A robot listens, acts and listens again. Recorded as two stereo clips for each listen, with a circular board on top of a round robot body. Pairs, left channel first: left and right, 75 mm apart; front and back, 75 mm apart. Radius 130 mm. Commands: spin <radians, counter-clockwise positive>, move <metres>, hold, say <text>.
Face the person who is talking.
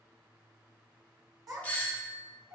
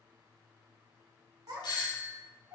spin -2.36
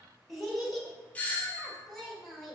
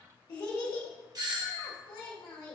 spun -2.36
say Facing the child speaking.